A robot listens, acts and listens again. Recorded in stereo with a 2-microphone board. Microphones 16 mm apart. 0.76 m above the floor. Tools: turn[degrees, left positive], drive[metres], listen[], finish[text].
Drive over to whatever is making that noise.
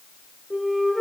Thought: The flute: about 15° left or 165° left.
Action: turn[15]
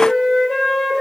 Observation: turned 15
Thought: So it is at 155° left.
Action: turn[155]
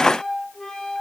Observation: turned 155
Thought: The flute is now 60° left.
Action: turn[60]
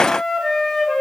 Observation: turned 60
Thought: The flute is now 25° left.
Action: turn[25]
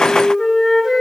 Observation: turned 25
Action: drive[1.0]
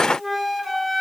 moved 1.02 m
Action: drive[1.0]
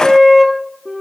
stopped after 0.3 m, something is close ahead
Action: finish[I am next to the flute.]